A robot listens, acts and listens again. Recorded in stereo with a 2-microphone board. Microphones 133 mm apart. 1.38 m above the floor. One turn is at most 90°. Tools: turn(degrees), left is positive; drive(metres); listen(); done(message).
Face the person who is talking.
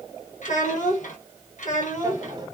turn(degrees=70)
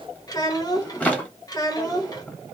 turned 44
turn(degrees=30)
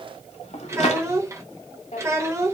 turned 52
turn(degrees=-25)
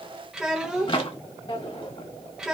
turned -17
done("Found it: a child speaking, straight ahead, 1 to 2 m away.")